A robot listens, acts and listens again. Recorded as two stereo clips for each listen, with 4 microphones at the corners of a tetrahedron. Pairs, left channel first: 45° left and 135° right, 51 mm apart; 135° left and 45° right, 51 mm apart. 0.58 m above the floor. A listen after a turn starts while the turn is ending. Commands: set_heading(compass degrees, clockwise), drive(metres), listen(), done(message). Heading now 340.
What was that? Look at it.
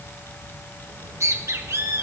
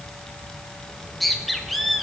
set_heading(120)
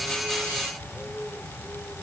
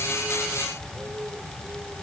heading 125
set_heading(115)
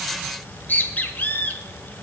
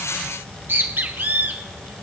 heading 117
done("Found it: a bird, straight ahead.")